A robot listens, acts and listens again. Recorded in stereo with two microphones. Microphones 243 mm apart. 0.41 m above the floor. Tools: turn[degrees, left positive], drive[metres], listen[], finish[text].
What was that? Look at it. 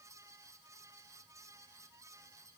Action: listen[]
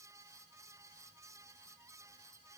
Action: listen[]
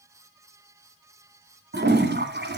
Thought: The toilet flushing: about 45° right or 135° right.
Action: turn[-45]
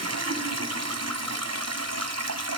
Thought: So it is at 90° right.
Action: turn[-90]
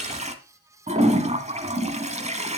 Thought: The toilet flushing is now 25° right.
Action: turn[-25]
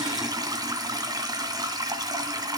Thought: The toilet flushing is now 15° right.
Action: turn[-15]
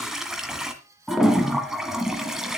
Action: finish[Found it: a toilet flushing, straight ahead, 1 to 2 m away.]